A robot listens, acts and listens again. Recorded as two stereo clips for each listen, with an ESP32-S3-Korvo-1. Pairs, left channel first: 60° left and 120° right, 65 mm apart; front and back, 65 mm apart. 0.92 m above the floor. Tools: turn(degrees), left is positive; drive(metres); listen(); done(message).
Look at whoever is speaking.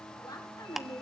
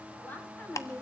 turn(degrees=65)
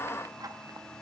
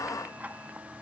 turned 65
listen()
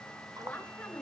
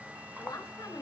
turn(degrees=-15)
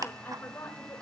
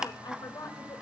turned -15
done("Found it: a woman speaking, straight ahead, over 4 m away.")